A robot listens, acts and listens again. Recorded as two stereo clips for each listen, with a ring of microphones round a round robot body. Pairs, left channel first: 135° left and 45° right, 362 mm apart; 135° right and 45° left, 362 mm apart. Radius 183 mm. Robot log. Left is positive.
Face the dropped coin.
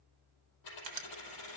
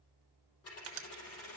note: The dropped coin: 170° left.
cmd yaw +170
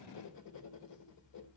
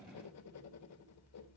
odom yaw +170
end: I heard a dropped coin from this way, but can't make it out now.